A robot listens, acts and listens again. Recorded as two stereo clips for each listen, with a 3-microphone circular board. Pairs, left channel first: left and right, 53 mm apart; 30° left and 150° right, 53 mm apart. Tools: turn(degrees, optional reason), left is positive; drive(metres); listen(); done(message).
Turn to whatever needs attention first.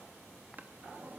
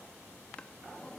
listen()
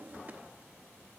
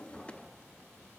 listen()
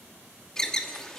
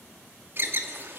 turn(degrees=170, reason="The alarm: 170° left.")
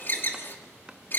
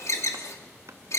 turn(degrees=45, reason="The alarm is now 45° left.")
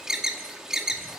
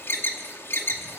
turn(degrees=-10, reason="The alarm is now 10° right.")
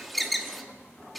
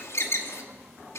done("Facing the alarm, 2 to 4 m away.")